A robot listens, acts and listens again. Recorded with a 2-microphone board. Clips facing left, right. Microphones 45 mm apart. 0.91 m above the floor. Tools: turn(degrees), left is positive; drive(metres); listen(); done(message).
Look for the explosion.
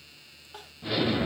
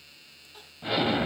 turn(degrees=-20)
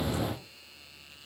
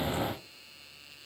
done("Facing the explosion.")